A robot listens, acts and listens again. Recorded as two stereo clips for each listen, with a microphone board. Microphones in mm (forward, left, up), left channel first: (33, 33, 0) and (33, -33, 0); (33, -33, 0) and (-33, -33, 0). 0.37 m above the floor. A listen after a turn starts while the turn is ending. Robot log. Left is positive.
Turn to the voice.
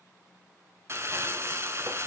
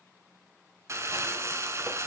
cmd idle
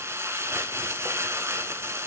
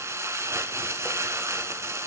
cmd idle
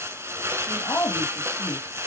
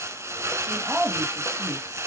note: The woman speaking: 105° left.
cmd yaw +105
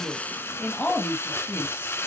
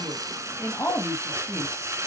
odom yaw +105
note: The woman speaking is now 25° left.
cmd yaw +25
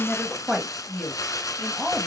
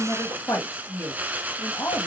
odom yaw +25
end: Found it: a woman speaking, straight ahead.